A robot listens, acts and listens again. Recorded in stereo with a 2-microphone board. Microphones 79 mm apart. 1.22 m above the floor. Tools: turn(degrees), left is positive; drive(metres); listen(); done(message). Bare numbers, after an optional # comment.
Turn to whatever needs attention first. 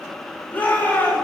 # The shout: about 25° left or 155° left.
turn(25)
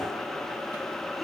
listen()
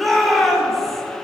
done("Found it: a shout, straight ahead, over 4 m away.")